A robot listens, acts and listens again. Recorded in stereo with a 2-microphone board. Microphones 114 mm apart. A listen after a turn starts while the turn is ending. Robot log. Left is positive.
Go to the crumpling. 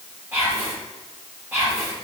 cmd idle
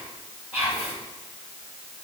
cmd idle
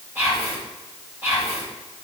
end: I can't make out crumpling, only whispering.